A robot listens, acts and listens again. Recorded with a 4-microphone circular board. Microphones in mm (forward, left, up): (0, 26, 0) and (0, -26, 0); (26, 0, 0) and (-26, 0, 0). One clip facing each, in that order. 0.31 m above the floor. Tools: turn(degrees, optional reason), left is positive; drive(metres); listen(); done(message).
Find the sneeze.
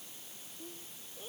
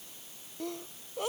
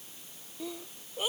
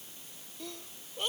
turn(degrees=-85, reason="The sneeze: 85° right.")
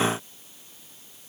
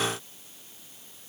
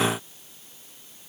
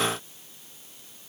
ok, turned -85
done("Facing where the sneeze came from. I can't hear it now.")